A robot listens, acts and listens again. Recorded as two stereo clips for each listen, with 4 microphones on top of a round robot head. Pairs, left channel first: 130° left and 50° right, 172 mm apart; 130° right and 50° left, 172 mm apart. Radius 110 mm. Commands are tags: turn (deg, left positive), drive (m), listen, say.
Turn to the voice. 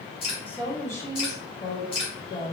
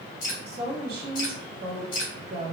<turn deg="85"/>
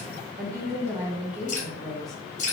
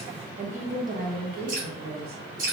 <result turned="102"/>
<turn deg="45"/>
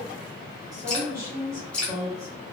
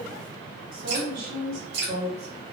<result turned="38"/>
<turn deg="25"/>
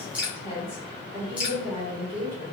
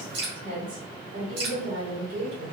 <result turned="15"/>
<turn deg="10"/>
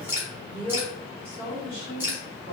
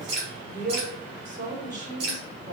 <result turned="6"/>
<say>Facing the woman speaking, 2 to 4 m away.</say>